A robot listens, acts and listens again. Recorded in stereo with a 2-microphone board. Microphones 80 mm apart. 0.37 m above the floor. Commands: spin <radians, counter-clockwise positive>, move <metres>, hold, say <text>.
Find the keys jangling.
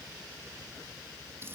hold
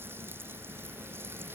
hold
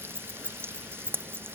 spin -0.52
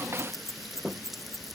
spin -2.44
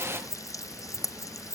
say Found it: keys jangling, straight ahead.